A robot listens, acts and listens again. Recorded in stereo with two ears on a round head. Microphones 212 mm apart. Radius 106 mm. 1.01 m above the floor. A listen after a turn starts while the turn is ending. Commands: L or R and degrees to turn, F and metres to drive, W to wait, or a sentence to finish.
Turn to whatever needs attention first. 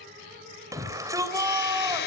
R30
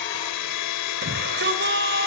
R135
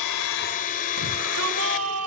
R65
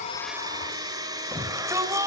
R10
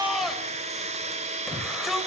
Facing the shout.